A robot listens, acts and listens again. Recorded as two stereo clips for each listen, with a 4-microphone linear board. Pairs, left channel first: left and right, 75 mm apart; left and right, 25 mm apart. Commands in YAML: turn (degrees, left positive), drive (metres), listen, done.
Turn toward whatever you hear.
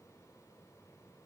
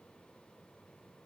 listen: true
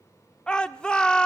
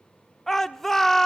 turn: 30
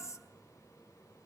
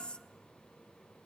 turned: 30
listen: true
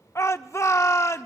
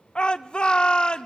turn: 130
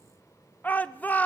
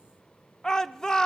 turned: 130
turn: 25
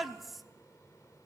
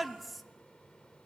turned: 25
done: "Found it: a shout, straight ahead, 1 to 2 m away."